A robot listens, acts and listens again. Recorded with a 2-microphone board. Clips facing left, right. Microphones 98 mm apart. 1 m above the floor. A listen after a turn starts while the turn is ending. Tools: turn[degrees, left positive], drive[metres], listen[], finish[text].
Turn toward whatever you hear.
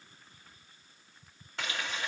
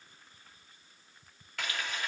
Thought: The frying: about 25° left or 155° left.
Action: turn[25]
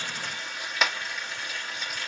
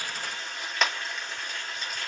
Action: finish[Facing the frying, 2 to 4 m away.]